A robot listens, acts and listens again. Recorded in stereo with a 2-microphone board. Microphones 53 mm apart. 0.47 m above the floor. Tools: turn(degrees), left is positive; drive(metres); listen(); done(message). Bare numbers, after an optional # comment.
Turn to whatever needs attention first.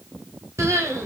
# The crying: about 65° right or 115° right.
turn(-65)
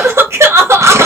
# So it is at 55° right.
turn(-55)
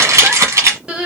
# The crying is now 15° right.
turn(-15)
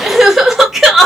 done("Facing the crying, under 1 m away.")